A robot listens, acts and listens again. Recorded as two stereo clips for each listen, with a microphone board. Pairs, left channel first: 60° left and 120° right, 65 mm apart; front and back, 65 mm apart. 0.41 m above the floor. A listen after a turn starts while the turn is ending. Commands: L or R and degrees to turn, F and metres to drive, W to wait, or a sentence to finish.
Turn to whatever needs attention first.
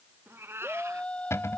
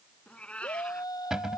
R15
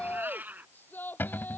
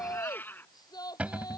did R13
Found it: a shout, straight ahead.